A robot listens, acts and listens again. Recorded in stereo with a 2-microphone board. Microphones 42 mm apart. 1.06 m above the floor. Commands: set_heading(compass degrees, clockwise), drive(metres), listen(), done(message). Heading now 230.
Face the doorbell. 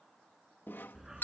set_heading(170)
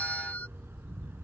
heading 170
listen()
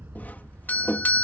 set_heading(120)
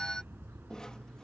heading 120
set_heading(100)
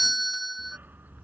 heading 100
done("Found it: a doorbell, straight ahead.")